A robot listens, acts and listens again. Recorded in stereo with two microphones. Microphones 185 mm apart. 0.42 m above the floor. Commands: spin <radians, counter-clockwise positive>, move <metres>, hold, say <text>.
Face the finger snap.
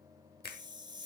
spin 0.96
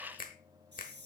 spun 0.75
spin 1.05
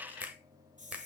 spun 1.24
spin -0.17
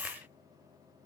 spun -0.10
hold
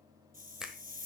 say Facing the finger snap, 1 to 2 m away.